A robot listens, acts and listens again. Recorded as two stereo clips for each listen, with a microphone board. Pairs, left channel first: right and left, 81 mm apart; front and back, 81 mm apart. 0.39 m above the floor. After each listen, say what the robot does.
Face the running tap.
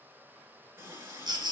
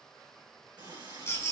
Turn 150° left.
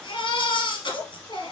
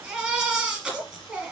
Turn 10° right.
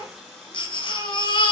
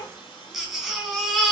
Facing the running tap, over 4 m away.